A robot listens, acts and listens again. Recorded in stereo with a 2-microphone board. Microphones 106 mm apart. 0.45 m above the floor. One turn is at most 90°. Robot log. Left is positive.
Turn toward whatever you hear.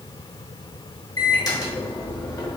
note: The microwave: about 40° left or 140° left.
cmd yaw +40
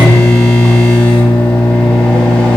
note: So it is at 10° left.
cmd yaw +10
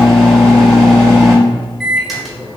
end: Found it: a microwave, straight ahead, 1 to 2 m away.